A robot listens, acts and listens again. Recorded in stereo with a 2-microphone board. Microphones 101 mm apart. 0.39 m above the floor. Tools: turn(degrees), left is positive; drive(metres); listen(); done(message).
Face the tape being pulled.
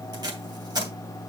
turn(degrees=-45)
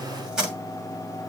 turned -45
turn(degrees=-10)
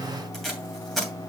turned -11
done("Facing the tape being pulled, 2 to 4 m away.")